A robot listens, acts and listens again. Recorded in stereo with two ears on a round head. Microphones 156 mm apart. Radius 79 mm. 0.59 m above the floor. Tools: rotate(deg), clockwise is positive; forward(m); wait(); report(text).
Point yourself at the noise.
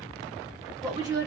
rotate(20)
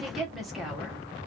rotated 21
report("Found it: a woman speaking, straight ahead, 1 to 2 m away.")